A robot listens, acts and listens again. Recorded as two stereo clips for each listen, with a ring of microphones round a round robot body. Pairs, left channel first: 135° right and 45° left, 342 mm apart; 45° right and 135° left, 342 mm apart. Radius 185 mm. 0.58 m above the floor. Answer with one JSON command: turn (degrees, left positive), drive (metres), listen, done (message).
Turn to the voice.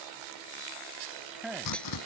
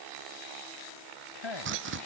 {"turn": -45}
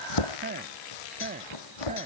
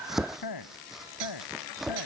{"turn": -25}
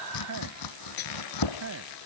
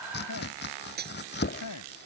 {"done": "Facing the man speaking."}